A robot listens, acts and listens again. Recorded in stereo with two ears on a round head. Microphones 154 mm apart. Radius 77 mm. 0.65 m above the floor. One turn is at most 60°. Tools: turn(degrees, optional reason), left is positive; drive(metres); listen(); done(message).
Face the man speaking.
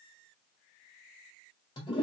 listen()
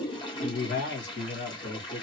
turn(degrees=45, reason="The man speaking: about 45° left or 135° left.")
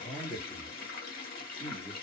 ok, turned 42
done("Facing the man speaking.")